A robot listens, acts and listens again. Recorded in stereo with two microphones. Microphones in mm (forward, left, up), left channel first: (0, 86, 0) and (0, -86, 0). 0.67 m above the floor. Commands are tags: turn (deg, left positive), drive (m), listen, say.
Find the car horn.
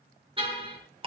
<turn deg="-30"/>
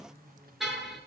<say>Found it: a car horn, straight ahead.</say>